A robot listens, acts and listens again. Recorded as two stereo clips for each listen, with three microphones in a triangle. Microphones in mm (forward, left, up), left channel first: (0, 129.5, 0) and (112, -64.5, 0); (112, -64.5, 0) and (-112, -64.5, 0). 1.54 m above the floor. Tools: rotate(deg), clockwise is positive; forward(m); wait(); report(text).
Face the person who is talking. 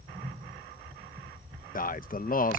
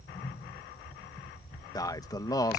rotate(-70)
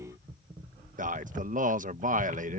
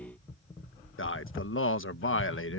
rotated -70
rotate(10)
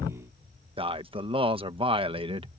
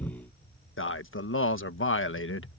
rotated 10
report("Facing the man speaking.")